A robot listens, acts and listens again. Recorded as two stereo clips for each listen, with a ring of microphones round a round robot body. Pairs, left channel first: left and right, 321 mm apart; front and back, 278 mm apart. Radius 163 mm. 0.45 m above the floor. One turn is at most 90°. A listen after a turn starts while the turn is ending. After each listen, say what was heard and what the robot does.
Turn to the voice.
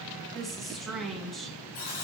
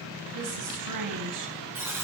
The woman speaking: straight behind. Turn 90° left.
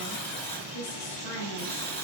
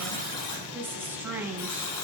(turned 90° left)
The woman speaking is now 100° left. Turn 90° left.
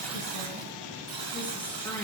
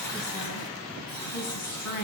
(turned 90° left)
Found it: a woman speaking, straight ahead, 2 to 4 m away.